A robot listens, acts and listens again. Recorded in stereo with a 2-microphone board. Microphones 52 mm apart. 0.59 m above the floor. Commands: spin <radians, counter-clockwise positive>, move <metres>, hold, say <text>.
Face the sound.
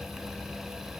hold
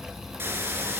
spin -0.79
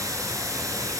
spin -1.66
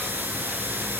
spin -0.61
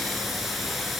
say Found it: a hiss, straight ahead, 2 to 4 m away.